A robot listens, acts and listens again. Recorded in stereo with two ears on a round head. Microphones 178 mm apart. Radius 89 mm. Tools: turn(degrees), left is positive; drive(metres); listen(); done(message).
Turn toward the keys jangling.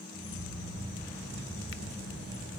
turn(degrees=65)
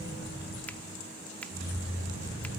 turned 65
turn(degrees=65)
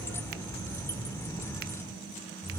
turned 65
turn(degrees=15)
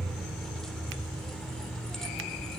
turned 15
done("Found it: keys jangling, straight ahead, 1 to 2 m away.")